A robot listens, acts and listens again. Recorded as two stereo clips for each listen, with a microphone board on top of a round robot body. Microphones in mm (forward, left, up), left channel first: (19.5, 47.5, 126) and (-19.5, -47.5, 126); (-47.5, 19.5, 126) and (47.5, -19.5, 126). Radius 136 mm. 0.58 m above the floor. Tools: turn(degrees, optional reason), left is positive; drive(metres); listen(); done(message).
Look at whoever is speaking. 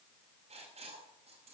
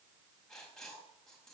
listen()
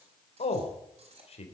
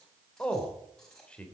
turn(degrees=75, reason="The man speaking: 75° left.")
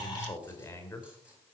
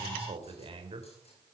done("Facing the man speaking, 2 to 4 m away.")